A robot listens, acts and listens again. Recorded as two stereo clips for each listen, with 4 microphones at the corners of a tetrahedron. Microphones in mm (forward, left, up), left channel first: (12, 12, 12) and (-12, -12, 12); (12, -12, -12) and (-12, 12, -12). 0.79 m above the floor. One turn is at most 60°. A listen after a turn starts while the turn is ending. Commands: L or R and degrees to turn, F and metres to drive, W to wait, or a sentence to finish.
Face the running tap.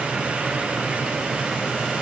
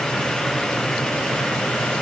W
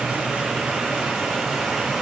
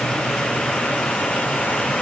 W
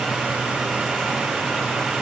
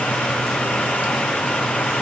I can't make out a running tap.